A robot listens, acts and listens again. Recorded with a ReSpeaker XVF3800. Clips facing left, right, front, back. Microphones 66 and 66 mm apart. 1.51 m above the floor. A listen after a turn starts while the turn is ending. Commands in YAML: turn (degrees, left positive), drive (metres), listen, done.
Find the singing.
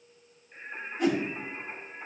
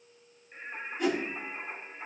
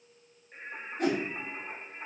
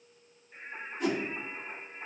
turn: -25
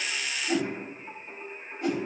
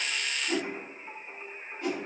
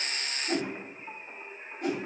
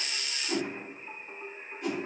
done: "Facing the singing, over 4 m away."